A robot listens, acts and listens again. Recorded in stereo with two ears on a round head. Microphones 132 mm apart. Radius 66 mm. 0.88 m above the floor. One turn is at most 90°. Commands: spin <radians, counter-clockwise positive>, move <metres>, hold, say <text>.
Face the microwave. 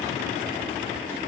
hold
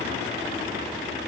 hold
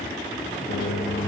spin 1.57
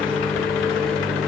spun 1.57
say Facing the microwave, 2 to 4 m away.